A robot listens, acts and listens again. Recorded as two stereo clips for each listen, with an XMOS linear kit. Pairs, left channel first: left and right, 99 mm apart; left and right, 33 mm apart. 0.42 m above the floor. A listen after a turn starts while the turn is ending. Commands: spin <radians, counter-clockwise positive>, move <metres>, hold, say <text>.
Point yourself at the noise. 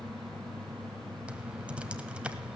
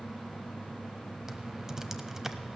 spin -0.52
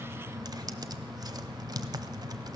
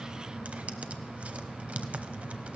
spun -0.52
spin -2.36
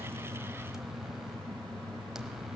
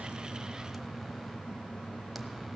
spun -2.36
say Facing the typing on a keyboard.